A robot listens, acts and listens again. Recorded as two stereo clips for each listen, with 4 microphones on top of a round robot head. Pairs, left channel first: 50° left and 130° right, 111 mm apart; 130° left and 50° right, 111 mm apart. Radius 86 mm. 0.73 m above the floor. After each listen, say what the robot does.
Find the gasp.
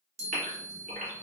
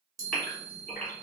Turn 145° right.
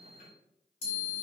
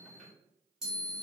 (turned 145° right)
Facing where the gasp came from. I can't hear it now.